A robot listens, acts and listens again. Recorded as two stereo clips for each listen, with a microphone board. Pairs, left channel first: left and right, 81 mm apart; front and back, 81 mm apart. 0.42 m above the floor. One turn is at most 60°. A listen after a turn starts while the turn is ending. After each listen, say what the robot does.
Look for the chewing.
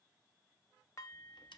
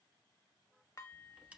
Keep listening.
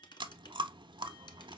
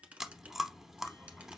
Turn 60° right.
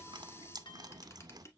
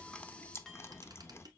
Turn 60° right.
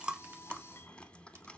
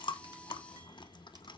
Turn 10° left.
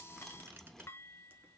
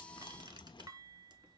Keep listening.
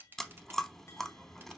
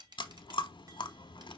Facing the chewing.